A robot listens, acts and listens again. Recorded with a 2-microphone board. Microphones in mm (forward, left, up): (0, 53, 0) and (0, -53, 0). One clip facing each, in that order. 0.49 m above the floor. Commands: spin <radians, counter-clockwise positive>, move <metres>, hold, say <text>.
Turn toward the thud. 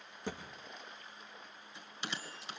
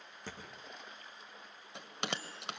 spin 0.26
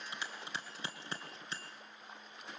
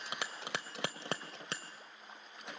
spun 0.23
hold
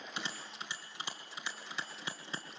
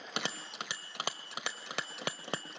say I heard a thud, but can't make it out now. It was about 5° left or 150° left.